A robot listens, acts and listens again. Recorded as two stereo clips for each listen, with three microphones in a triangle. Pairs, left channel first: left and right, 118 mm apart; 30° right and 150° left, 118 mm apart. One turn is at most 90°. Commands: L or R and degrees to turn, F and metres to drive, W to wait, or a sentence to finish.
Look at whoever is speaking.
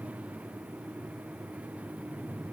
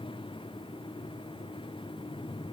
W
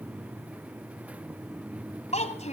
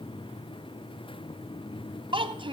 L90
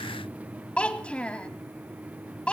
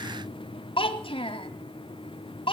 L10
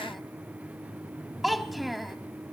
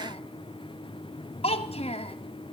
Found it: a child speaking, straight ahead.